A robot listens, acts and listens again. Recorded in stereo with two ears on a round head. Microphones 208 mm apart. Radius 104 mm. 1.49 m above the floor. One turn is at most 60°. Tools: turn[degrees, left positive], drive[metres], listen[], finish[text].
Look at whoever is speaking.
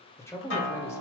Action: turn[30]
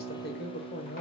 Thought: So it is at 135° left.
Action: turn[60]
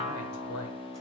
Thought: The man speaking is now 70° left.
Action: turn[60]
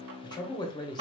Thought: The man speaking is now 20° left.
Action: turn[20]
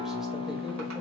Action: listen[]
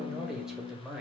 Action: finish[Facing the man speaking, 1 to 2 m away.]